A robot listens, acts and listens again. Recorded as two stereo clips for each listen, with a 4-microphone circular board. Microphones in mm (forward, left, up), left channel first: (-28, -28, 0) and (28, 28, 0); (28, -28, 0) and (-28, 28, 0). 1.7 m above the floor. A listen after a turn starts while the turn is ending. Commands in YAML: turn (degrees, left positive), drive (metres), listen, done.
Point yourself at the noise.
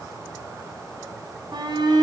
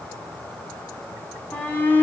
turn: 20
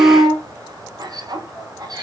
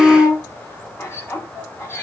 turn: 15
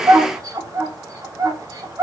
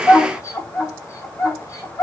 done: "Found it: a shout, straight ahead."